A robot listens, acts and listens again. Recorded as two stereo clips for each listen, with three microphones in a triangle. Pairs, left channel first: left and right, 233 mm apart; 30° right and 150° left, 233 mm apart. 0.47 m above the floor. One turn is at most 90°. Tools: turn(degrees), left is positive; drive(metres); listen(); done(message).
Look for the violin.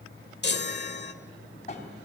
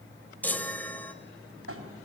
listen()
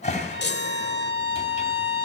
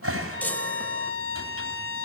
turn(degrees=-55)
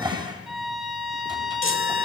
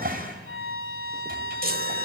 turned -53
done("Facing the violin, 2 to 4 m away.")